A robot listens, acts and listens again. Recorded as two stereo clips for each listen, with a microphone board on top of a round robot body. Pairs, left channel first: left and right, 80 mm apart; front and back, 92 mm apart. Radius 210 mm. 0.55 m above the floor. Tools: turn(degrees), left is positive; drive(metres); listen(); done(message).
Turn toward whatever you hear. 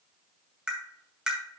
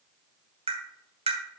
turn(degrees=-170)
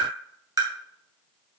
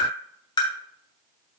turn(degrees=-40)
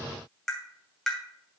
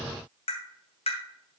done("Found it: tapping, straight ahead, 2 to 4 m away.")